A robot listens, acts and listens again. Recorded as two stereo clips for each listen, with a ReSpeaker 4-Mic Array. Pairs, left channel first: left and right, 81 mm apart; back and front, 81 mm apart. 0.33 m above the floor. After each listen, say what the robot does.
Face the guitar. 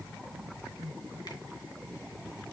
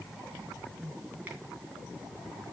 Keep listening.
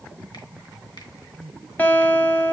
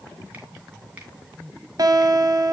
Turn 25° left.
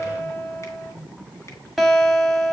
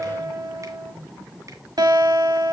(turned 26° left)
Facing the guitar.